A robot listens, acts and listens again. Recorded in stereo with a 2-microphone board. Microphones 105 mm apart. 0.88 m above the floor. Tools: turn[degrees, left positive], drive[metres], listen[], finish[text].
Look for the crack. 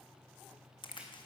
Thought: The crack: about 50° left or 130° left.
Action: turn[50]
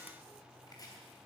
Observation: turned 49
Action: listen[]
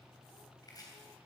Action: finish[I heard a crack, but can't make it out now. It was about straight ahead or 80° left.]